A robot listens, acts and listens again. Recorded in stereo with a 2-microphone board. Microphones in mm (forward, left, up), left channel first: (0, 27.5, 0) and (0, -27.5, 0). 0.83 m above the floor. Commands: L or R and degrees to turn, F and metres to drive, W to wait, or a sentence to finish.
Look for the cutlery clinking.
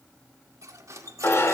R75
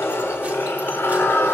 W
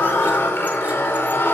W
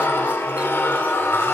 I heard cutlery clinking, but can't make it out now. It was about straight ahead or 30° right.